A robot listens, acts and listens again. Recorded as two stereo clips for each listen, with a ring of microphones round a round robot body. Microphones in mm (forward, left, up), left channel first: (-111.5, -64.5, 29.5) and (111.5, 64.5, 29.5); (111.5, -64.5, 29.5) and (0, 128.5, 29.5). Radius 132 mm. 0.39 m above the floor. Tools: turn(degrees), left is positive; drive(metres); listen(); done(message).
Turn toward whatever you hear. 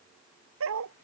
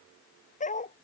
done("Facing the dog barking.")